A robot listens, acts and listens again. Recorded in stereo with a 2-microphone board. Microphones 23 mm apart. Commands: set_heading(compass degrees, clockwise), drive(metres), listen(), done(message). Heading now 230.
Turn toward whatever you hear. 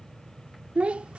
set_heading(305)
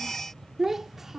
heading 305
set_heading(320)
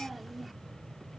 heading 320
done("Found it: a child speaking, straight ahead.")